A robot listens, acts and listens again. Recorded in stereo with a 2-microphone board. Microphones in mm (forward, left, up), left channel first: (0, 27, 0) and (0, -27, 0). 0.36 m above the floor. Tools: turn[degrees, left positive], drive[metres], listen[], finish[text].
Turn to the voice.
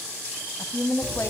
Thought: The woman speaking: about 65° left or 115° left.
Action: turn[65]
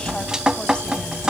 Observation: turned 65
Action: listen[]
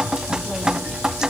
Action: listen[]
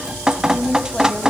Thought: So it is at 20° left.
Action: turn[20]
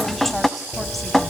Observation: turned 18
Action: listen[]
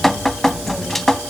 Action: listen[]
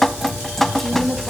Action: finish[Facing the woman speaking.]